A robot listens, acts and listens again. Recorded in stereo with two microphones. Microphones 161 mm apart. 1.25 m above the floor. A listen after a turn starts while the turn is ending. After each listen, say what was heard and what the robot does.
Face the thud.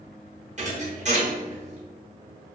The thud: about 50° right or 130° right. Turn 50° right.
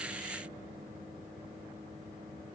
Keep listening.
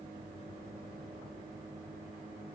I heard a thud, but can't make it out now. It was about straight ahead or 80° right.